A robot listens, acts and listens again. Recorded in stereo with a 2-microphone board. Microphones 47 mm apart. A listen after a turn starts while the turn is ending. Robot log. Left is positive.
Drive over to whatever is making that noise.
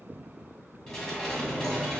cmd yaw +30
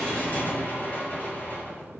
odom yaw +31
note: So it is at 135° left.
cmd yaw +135
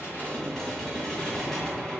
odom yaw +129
cmd fwd 1.0
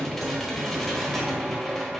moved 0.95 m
cmd fwd 1.0
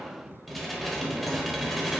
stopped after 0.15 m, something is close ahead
end: I am next to the dishes clattering.